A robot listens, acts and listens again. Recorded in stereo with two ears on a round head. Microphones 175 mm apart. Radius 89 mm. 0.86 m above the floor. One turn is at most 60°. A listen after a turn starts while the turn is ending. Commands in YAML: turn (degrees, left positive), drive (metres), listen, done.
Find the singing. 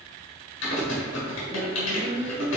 turn: -35
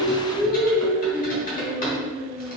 turn: -40
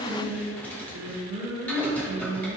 turn: -25
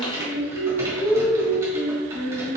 done: "Facing the singing."